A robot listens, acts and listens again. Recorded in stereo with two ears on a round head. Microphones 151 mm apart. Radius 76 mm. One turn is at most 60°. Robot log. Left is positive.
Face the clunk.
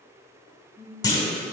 note: The clunk: about 20° left or 160° left.
cmd yaw +20
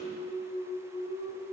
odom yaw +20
cmd idle
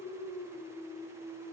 end: I heard a clunk, but can't make it out now. It was about straight ahead or 140° left.